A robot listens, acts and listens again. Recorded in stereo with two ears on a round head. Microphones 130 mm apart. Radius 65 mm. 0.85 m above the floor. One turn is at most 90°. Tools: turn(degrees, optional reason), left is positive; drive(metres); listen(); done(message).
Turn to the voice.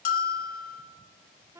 listen()
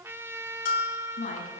turn(degrees=60, reason="The woman speaking: about 60° left or 120° left.")
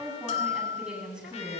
done("Found it: a woman speaking, straight ahead.")